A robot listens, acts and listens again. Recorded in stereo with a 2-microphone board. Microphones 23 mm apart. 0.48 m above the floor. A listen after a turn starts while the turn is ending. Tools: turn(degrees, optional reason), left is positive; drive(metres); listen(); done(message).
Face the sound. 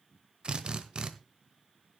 turn(degrees=-50, reason="The drill: about 50° right or 130° right.")
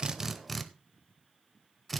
done("Found it: a drill, straight ahead, 1 to 2 m away.")